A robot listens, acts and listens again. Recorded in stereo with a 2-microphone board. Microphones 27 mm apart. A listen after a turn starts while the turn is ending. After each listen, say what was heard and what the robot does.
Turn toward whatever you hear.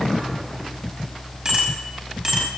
The bicycle bell: about 30° right or 150° right. Turn 30° right.
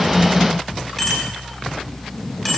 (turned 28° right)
Found it: a bicycle bell, straight ahead, over 4 m away.